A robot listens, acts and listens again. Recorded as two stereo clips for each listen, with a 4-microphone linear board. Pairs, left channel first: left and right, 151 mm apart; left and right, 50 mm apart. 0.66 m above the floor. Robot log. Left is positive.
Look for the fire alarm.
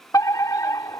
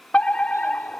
note: The fire alarm: about 20° left or 160° left.
cmd yaw +20
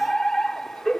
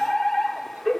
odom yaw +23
end: Facing the fire alarm.